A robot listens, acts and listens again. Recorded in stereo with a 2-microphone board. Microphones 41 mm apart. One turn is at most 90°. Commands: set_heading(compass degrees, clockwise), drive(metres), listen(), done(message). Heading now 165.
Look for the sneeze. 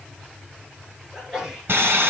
set_heading(185)
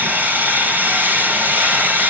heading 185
listen()
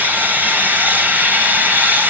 done("I heard a sneeze, but can't make it out now. It was about straight ahead or 140° right.")